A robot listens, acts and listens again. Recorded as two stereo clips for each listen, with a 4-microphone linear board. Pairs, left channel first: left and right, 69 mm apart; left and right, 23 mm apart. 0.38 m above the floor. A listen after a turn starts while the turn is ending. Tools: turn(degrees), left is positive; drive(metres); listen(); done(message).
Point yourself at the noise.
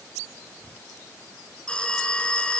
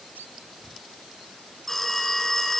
turn(degrees=15)
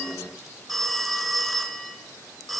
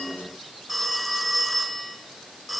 done("Found it: a phone ringing, straight ahead.")